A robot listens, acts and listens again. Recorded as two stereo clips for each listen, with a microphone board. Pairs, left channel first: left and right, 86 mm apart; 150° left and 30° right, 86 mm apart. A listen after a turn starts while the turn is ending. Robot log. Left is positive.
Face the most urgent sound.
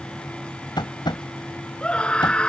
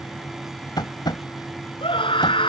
note: The scream: 170° left.
cmd yaw +170
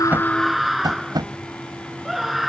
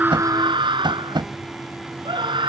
end: Facing the scream.